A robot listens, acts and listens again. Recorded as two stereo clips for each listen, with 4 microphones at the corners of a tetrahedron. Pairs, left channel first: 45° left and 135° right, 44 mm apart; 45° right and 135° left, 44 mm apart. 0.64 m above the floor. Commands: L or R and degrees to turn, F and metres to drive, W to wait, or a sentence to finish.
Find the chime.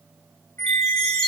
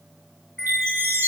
L125
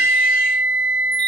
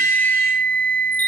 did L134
R10
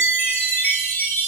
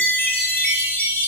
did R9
Found it: a chime, straight ahead, over 4 m away.